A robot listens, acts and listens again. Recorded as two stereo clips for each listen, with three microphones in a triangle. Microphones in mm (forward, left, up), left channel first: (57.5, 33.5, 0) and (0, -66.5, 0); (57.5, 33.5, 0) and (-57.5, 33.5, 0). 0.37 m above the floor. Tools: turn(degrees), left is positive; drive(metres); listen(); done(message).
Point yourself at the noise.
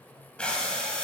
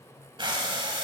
turn(degrees=140)
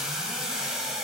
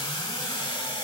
turn(degrees=-35)
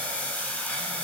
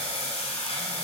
turn(degrees=-15)
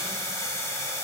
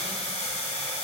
done("Found it: breathing, straight ahead.")